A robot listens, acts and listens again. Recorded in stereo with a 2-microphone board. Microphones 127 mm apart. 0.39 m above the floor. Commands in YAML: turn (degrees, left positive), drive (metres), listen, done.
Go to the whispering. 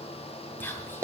turn: 15
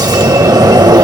listen: true
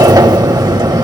listen: true
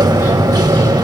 done: "I heard whispering, but can't make it out now. It was about straight ahead or 150° left. I did not reach it."